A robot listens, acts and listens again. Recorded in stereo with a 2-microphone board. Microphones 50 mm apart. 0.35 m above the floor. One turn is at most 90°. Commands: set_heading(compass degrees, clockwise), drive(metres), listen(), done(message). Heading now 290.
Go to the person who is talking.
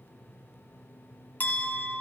listen()
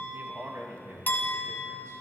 set_heading(350)
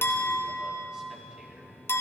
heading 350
listen()
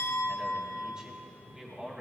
set_heading(5)
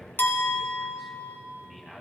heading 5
drive(1.0)
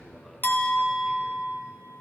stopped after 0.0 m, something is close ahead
listen()
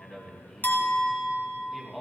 done("Blocked. The man speaking is further on, straight ahead.")